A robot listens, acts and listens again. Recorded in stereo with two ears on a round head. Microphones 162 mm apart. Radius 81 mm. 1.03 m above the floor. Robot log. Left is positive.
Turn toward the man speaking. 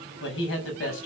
cmd yaw +90
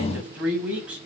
end: Facing the man speaking.